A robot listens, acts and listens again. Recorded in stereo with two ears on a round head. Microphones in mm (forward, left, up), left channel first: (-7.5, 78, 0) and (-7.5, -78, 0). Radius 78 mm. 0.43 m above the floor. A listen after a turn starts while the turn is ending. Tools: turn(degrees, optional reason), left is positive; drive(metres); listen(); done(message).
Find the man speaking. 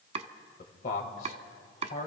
turn(degrees=45, reason="The man speaking: about 45° left or 135° left.")
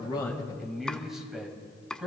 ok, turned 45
done("Facing the man speaking.")